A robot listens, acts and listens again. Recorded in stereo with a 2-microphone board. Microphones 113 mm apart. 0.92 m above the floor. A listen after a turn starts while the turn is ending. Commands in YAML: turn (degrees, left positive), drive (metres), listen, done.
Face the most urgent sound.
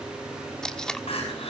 turn: 60
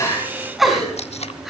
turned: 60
done: "Found it: crying, straight ahead."